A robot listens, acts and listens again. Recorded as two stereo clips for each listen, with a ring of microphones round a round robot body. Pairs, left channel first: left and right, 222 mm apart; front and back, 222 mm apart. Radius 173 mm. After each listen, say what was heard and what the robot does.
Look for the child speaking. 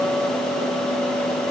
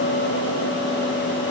Keep listening.
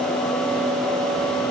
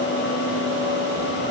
Keep listening.
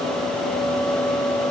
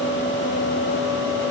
I can't make out a child speaking to turn to.